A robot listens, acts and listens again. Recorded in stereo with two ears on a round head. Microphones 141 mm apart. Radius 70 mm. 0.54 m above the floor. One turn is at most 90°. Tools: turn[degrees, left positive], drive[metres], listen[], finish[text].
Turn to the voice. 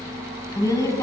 Thought: The woman speaking: about 20° left or 160° left.
Action: turn[20]
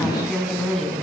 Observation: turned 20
Action: finish[Facing the woman speaking, over 4 m away.]